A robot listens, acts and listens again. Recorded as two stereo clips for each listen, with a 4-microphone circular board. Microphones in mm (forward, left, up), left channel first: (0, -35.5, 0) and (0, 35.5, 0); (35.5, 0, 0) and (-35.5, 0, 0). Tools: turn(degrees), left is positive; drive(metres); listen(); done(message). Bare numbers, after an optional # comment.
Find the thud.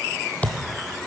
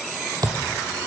# The thud: 160° right.
turn(-160)
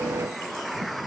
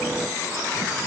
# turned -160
done("Facing where the thud came from. I can't hear it now.")